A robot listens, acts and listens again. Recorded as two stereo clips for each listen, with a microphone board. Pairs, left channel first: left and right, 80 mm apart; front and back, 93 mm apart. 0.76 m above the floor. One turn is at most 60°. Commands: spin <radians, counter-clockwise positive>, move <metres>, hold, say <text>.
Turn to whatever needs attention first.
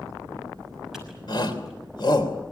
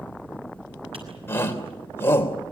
spin 1.05
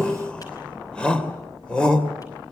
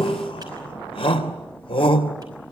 spin 0.17
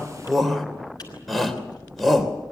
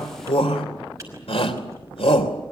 say Found it: a shout, straight ahead, 2 to 4 m away.